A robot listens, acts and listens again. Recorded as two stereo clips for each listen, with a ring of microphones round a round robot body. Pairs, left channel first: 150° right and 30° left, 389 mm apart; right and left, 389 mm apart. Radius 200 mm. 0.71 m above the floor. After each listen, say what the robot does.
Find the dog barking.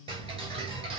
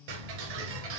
Keep listening.
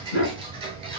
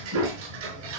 Turn 145° left.
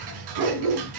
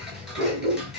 Turn 20° left.
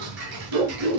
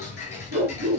Found it: a dog barking, straight ahead, 2 to 4 m away.